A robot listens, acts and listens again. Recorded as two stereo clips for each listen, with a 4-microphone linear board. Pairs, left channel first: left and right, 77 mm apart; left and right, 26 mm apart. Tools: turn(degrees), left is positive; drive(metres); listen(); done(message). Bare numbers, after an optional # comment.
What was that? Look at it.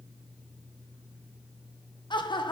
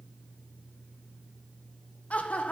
turn(90)
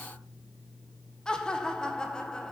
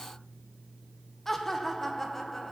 # So it is at 10° left.
turn(10)
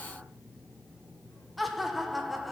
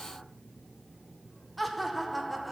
done("Facing the laughter.")